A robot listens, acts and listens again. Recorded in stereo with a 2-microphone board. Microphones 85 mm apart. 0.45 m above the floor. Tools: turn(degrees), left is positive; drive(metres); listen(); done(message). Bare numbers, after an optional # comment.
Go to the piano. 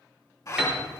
turn(-30)
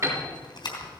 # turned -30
# So it is at 145° right.
turn(-145)
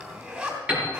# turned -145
# The piano is now 15° right.
turn(-15)
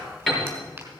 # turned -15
drive(1.0)
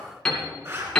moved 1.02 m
# The piano is now 10° left.
turn(10)
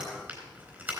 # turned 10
listen()
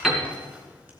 drive(1.0)
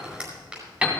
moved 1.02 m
# The piano is now 15° right.
turn(-15)
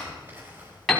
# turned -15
drive(1.0)
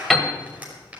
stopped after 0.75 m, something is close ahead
done("Arrived at the piano, straight ahead.")